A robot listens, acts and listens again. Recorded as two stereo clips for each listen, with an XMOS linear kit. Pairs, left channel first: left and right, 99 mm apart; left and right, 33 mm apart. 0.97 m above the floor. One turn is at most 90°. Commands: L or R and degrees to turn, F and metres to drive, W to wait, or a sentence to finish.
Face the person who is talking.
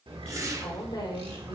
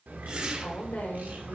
L50
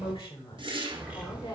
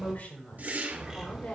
L75
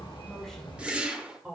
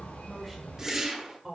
Found it: a woman speaking, straight ahead.